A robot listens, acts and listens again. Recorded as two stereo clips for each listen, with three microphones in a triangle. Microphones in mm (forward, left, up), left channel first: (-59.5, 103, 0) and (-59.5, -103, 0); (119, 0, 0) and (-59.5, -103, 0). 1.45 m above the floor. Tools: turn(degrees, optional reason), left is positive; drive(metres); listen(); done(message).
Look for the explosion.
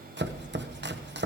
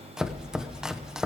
turn(degrees=55, reason="The explosion: 55° left.")
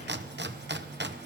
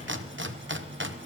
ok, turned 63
done("Facing where the explosion came from. I can't hear it now.")